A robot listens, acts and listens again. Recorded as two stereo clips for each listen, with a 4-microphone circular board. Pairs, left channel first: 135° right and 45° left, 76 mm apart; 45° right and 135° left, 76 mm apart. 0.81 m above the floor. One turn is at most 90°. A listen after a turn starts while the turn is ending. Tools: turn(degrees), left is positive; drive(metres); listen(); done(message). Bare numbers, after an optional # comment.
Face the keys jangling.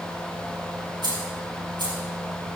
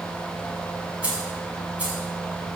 # The keys jangling: 65° left.
turn(65)
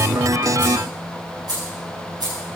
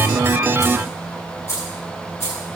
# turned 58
# The keys jangling is now 10° left.
turn(10)
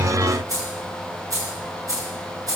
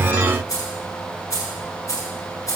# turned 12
done("Facing the keys jangling.")